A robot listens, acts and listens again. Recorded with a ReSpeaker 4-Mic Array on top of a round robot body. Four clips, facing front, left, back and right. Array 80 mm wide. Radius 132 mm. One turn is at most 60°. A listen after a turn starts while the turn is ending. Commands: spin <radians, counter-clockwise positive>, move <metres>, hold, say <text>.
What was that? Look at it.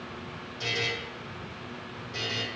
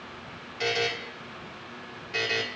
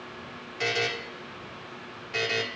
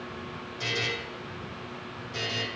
spin 1.05
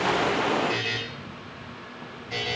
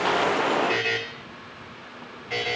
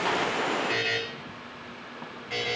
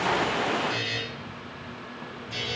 spin 1.05
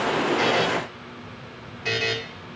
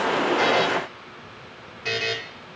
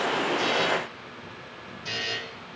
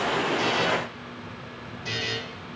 spin 0.70
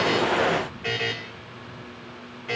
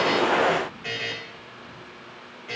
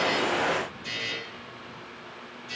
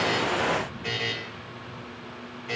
say Facing the buzzer.